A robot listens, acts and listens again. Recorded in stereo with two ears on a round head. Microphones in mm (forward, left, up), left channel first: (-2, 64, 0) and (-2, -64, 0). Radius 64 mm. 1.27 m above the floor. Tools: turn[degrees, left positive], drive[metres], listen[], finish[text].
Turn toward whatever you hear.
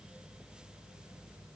Action: listen[]
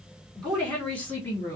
Thought: The woman speaking: about 20° left or 160° left.
Action: turn[20]
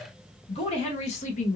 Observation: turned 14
Thought: So it is at 125° left.
Action: turn[125]
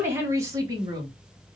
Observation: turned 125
Thought: The woman speaking is now 30° right.
Action: turn[-30]
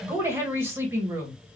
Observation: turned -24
Thought: The woman speaking is now 15° right.
Action: turn[-15]
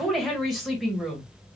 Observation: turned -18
Action: finish[Facing the woman speaking.]